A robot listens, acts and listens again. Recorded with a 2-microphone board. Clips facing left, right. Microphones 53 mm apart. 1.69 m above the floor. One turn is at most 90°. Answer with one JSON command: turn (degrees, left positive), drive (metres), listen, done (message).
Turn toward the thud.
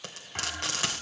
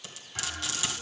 {"turn": 40}
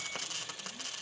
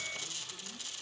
{"listen": true}
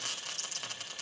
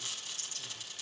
{"done": "I heard a thud, but can't make it out now. It was about straight ahead or 100° left."}